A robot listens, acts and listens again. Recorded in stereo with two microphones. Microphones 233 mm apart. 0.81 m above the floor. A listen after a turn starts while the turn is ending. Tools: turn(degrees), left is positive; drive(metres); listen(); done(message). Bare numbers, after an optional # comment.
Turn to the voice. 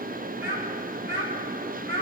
# The child speaking: about 55° right or 125° right.
turn(-55)
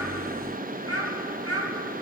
# So it is at 70° right.
turn(-70)
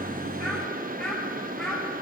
done("Facing the child speaking, over 4 m away.")